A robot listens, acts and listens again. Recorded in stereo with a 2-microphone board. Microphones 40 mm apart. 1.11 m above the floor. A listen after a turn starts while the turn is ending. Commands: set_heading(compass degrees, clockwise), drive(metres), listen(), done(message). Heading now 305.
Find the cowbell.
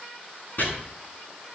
listen()
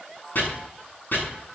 listen()
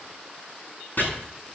done("I can't make out a cowbell, only chopping.")